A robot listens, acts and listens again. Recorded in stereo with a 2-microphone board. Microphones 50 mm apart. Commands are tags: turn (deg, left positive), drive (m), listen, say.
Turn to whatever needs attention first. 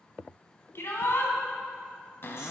<turn deg="60"/>
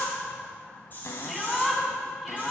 <say>Found it: a shout, straight ahead.</say>